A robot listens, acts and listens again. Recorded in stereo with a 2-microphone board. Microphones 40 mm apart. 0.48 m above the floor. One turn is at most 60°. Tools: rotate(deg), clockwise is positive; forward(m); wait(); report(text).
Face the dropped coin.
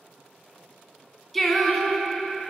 wait()
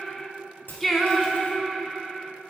rotate(-50)
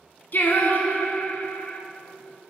wait()
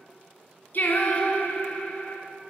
report("I heard a dropped coin, but can't make it out now. It was about straight ahead or 80° left.")